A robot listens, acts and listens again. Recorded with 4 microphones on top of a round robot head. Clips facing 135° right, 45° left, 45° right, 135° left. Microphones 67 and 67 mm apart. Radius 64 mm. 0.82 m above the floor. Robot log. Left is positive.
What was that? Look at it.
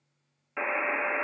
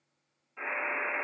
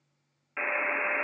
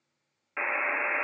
note: The buzzer: 150° right.
cmd yaw -150
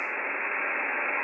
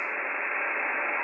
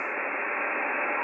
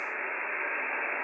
note: The buzzer is now 35° right.
cmd yaw -35
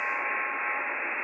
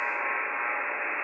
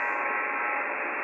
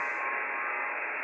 note: The buzzer is now 30° right.
cmd yaw -30
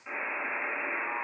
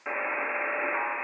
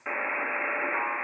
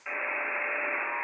note: The buzzer is now 15° left.
cmd yaw +15
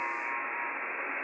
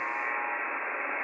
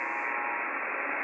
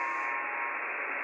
end: Found it: a buzzer, straight ahead, under 1 m away.